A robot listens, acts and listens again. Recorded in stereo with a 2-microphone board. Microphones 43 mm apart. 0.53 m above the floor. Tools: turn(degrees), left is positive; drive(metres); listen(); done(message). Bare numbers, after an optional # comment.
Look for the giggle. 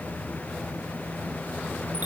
listen()
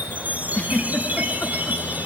# The giggle: about 40° left or 140° left.
turn(40)
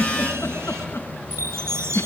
# So it is at 95° left.
turn(95)
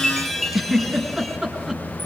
# The giggle is now 10° right.
turn(-10)
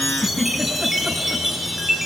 done("Found it: a giggle, straight ahead.")